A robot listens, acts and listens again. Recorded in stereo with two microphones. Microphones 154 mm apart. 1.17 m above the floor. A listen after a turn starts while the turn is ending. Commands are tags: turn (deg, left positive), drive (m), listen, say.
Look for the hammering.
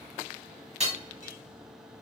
<turn deg="-45"/>
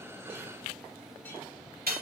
<turn deg="-90"/>
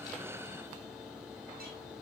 <listen/>
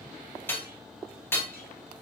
<turn deg="15"/>
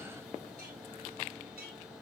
<listen/>
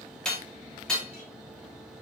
<say>Found it: hammering, straight ahead, 2 to 4 m away.</say>